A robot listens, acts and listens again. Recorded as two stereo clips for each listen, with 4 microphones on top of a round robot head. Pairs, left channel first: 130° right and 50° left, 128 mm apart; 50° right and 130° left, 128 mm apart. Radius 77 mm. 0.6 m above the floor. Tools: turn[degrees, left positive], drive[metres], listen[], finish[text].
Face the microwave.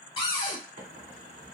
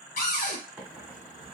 Thought: The microwave: 50° left.
Action: turn[50]
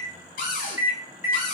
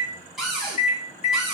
Thought: The microwave is now 15° right.
Action: turn[-15]
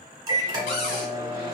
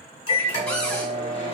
Action: finish[Found it: a microwave, straight ahead.]